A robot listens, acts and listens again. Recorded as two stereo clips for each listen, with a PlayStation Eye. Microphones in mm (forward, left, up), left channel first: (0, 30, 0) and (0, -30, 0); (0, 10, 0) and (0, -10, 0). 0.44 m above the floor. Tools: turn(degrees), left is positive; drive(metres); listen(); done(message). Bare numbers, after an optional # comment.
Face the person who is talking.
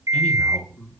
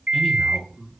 # The man speaking: about 25° left or 155° left.
turn(25)
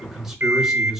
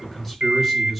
done("Found it: a man speaking, straight ahead.")